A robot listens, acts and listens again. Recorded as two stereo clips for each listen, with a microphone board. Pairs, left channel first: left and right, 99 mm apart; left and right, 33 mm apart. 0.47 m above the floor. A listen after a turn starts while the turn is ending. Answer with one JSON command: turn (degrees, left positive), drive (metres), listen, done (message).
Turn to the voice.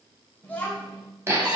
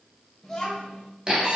{"turn": 20}
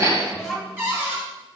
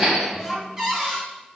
{"done": "Facing the child speaking."}